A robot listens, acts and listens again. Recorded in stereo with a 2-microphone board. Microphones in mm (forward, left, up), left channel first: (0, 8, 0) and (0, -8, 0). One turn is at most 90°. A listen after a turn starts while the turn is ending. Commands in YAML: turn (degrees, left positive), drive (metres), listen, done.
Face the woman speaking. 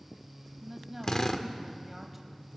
turn: -30
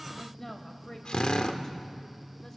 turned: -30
turn: 25
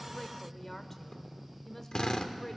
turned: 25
turn: 25
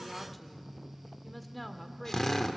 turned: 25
done: "Facing the woman speaking."